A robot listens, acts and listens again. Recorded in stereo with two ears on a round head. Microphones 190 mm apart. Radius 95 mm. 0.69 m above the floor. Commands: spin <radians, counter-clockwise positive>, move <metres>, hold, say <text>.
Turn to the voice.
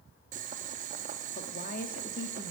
spin 0.79
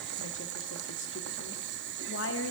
spin 1.48
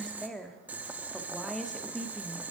say Found it: a woman speaking, straight ahead.